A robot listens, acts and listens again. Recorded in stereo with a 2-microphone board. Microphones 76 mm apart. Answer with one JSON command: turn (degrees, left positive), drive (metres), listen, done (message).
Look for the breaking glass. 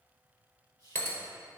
{"turn": 25}
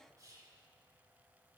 {"listen": true}
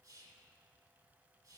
{"done": "I heard breaking glass, but can't make it out now. It was about straight ahead or 130° left."}